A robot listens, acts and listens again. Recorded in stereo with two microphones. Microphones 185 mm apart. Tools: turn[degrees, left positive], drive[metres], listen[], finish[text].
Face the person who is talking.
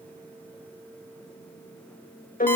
Action: listen[]
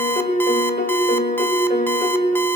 Action: listen[]
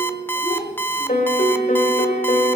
Thought: The child speaking: about 25° left or 155° left.
Action: turn[25]
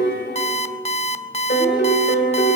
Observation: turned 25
Action: listen[]
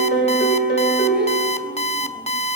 Action: listen[]
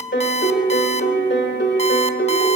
Action: finish[I heard a child speaking, but can't make it out now. It was about straight ahead or 130° left.]